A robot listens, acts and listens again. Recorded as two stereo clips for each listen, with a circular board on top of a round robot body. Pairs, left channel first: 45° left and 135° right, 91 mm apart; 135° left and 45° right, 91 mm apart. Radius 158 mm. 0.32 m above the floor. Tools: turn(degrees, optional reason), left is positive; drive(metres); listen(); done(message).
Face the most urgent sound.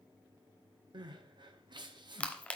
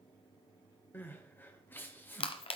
turn(degrees=-160, reason="The crying: 160° right.")
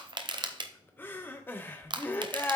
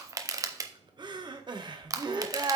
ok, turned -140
turn(degrees=-20, reason="The crying is now 20° right.")
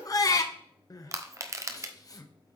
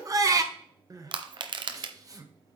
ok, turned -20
done("Facing the crying, 1 to 2 m away.")